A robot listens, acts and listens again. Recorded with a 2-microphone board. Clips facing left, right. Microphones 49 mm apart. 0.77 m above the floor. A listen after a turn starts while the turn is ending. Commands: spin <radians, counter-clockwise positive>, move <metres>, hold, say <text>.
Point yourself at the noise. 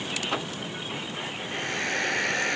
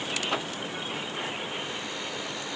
spin 1.22
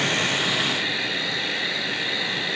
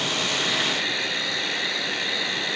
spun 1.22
say Found it: a hair dryer, straight ahead.